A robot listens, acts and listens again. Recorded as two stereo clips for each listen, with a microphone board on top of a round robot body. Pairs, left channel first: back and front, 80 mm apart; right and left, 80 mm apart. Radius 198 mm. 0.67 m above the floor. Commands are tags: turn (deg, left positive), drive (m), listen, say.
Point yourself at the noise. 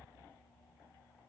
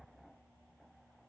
<listen/>
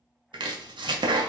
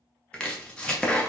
<turn deg="-10"/>
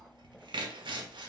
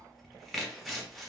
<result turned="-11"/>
<say>Facing the chopping.</say>